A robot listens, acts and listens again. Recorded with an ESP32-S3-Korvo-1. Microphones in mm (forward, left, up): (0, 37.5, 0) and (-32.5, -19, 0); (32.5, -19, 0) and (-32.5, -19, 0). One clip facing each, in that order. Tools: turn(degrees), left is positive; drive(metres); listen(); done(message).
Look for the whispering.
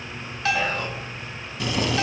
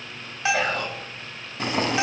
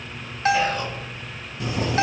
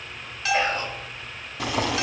turn(degrees=-130)
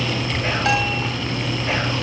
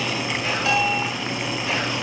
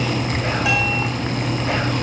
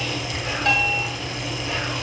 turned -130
listen()
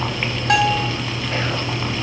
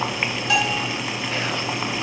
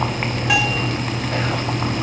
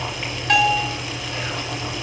listen()
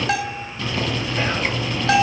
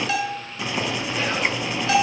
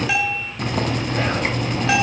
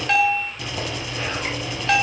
done("I heard whispering from this way, but can't make it out now.")